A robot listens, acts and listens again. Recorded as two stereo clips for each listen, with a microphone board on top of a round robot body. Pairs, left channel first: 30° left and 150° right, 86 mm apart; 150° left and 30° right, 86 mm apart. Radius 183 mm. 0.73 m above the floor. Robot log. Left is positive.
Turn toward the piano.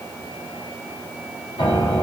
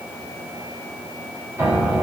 note: The piano: 40° left.
cmd yaw +40
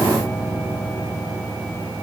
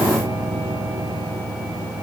end: Found it: a piano, straight ahead.